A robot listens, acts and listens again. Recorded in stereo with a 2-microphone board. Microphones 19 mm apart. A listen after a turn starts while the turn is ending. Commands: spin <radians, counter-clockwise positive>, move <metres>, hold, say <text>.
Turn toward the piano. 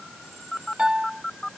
spin -1.05
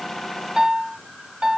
spin -0.61
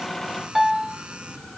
say Found it: a piano, straight ahead.